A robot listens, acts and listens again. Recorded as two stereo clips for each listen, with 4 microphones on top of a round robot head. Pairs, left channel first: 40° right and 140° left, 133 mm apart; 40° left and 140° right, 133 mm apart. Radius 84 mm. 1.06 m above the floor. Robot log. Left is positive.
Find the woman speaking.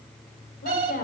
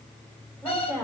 note: The woman speaking: 35° right.
cmd yaw -35
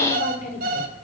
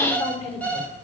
end: Facing the woman speaking.